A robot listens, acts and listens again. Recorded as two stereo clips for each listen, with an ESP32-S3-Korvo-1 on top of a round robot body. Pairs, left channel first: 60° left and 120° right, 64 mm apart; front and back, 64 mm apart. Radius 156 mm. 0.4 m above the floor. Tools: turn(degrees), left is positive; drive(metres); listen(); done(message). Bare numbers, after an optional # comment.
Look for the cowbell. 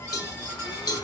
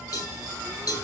# The cowbell: 35° left.
turn(35)
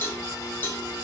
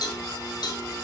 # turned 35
done("Found it: a cowbell, straight ahead, 2 to 4 m away.")